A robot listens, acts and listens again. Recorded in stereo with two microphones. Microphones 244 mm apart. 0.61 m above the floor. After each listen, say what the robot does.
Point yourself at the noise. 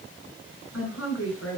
Turn 90° left.
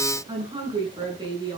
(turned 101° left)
Turn 15° right.
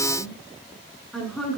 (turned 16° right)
Found it: a woman speaking, straight ahead.